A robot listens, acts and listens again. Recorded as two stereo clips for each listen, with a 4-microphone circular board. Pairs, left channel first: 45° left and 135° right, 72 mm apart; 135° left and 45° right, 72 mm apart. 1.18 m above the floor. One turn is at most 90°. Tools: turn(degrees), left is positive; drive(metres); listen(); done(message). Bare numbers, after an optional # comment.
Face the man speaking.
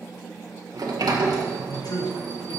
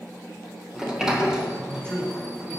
# The man speaking: 55° left.
turn(55)
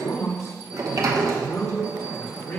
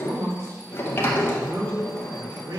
# The man speaking is now 15° right.
turn(-15)
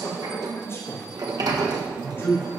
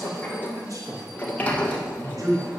# The man speaking is now 10° right.
turn(-10)
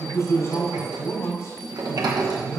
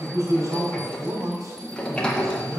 done("Facing the man speaking, over 4 m away.")